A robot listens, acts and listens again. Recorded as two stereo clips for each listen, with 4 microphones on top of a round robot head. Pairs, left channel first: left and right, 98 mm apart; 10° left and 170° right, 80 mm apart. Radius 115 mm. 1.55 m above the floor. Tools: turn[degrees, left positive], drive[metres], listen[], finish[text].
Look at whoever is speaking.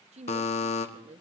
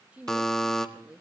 Thought: The woman speaking: 95° right.
Action: turn[-95]
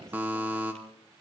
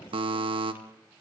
Action: listen[]
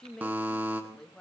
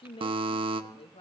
Action: finish[Found it: a woman speaking, straight ahead, 1 to 2 m away.]